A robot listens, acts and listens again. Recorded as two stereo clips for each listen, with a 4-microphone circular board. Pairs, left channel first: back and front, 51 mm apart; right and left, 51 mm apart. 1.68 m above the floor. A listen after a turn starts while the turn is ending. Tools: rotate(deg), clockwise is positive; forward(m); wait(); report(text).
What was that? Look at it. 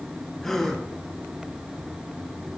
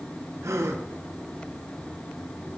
rotate(-100)
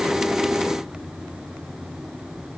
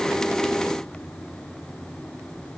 report("I heard a gasp from this way, but can't make it out now.")